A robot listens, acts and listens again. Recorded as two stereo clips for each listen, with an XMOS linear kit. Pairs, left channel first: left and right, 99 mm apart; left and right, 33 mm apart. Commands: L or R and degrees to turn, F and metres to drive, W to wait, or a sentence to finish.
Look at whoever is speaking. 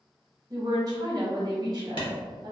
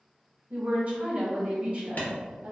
R40
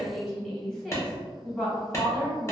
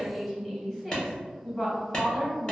Found it: a woman speaking, straight ahead, 1 to 2 m away.